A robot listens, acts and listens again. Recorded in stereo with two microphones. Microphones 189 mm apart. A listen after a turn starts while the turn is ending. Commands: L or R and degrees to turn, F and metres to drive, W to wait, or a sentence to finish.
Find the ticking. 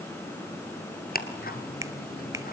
L55
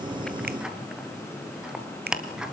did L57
Found it: ticking, straight ahead.